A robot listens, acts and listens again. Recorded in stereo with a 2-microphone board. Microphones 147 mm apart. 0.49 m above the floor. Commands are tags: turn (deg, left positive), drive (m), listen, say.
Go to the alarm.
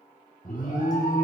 <turn deg="75"/>
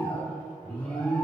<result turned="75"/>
<turn deg="10"/>
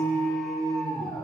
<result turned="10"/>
<drive m="1.0"/>
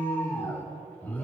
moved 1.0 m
<turn deg="15"/>
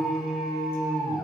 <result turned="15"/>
<drive m="1.0"/>
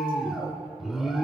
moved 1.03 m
<drive m="1.0"/>
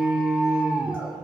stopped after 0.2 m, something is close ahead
<turn deg="-10"/>
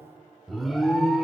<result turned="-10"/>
<say>Arrived at the alarm, straight ahead.</say>